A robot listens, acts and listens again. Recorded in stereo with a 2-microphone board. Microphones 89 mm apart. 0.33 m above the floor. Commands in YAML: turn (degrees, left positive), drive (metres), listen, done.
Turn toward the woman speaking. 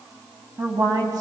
turn: -50
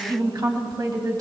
turn: -45
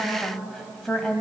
turn: 10
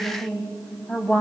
turn: 15
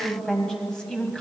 turn: 10
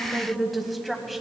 done: "Found it: a woman speaking, straight ahead, 1 to 2 m away."